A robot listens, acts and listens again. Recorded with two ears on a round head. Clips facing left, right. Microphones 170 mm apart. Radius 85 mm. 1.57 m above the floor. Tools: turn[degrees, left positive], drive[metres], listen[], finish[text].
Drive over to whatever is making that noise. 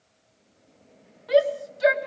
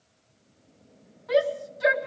Thought: The shout: about 40° left or 140° left.
Action: turn[40]
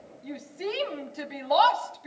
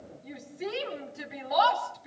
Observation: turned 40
Thought: So it is at 95° left.
Action: turn[95]
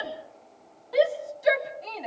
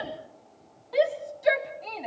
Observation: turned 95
Action: drive[1.0]
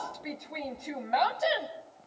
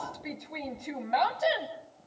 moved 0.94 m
Action: drive[1.0]
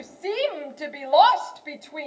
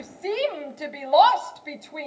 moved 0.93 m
Action: drive[1.0]
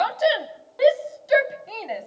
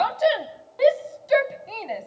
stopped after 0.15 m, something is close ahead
Action: finish[I am next to the shout.]